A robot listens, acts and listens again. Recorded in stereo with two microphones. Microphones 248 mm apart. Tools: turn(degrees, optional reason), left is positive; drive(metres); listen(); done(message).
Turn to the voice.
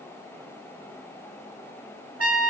listen()
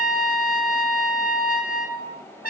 listen()
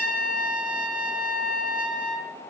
done("I can't make out anyone speaking, only a trumpet.")